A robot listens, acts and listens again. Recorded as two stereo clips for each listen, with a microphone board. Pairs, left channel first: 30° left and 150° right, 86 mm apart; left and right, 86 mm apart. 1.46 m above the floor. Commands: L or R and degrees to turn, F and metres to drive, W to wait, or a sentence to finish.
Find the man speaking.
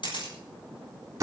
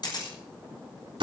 W
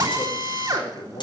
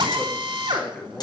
L15
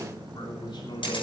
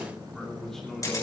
Found it: a man speaking, straight ahead, 2 to 4 m away.